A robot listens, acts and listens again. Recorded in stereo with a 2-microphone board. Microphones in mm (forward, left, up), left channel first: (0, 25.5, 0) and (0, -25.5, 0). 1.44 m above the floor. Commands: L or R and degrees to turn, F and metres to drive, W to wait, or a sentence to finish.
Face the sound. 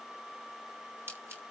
R45
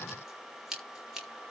Found it: scissors, straight ahead.